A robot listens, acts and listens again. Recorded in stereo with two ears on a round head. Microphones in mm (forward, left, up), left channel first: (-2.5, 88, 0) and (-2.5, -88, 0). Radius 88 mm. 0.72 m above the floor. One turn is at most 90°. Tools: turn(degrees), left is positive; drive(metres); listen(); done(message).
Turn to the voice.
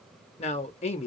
turn(degrees=35)
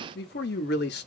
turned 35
turn(degrees=90)
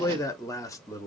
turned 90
turn(degrees=20)
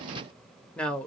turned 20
done("Facing the man speaking.")